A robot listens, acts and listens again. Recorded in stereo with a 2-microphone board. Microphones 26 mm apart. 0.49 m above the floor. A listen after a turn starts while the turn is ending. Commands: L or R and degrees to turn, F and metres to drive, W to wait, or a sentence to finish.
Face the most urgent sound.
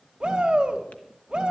R25
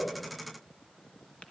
W
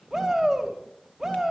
Found it: a shout, straight ahead, 2 to 4 m away.